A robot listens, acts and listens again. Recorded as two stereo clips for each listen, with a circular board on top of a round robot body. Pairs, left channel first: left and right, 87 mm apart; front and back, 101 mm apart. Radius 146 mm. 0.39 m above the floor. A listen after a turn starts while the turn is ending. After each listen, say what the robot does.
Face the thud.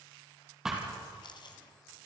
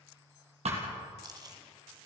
Turn 175° right.
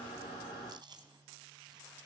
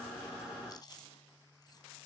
I heard a thud from this way, but can't make it out now.